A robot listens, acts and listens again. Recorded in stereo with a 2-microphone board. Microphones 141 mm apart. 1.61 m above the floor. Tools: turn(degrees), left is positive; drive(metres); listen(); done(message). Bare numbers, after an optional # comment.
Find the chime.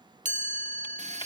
# The chime: about 60° right or 120° right.
turn(-60)
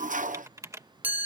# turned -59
# So it is at 15° right.
turn(-15)
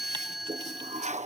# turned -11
done("Found it: a chime, straight ahead.")